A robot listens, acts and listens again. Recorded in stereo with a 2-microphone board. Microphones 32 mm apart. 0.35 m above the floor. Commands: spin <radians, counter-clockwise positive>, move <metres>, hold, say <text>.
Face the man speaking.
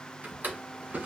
hold
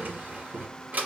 hold
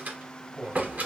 spin -0.52
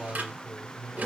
spin -2.01
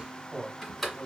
spin -0.70
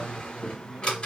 spin -0.17
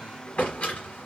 hold
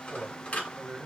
say Found it: a man speaking, straight ahead, 1 to 2 m away.